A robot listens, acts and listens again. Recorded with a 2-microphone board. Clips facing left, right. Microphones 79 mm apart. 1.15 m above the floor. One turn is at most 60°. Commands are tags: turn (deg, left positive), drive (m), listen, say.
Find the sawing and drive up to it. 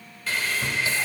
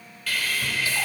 <turn deg="25"/>
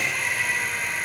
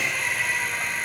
<drive m="1.0"/>
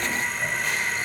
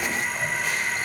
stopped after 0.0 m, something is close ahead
<say>Something is in my way. I am facing the sawing but have not reached it.</say>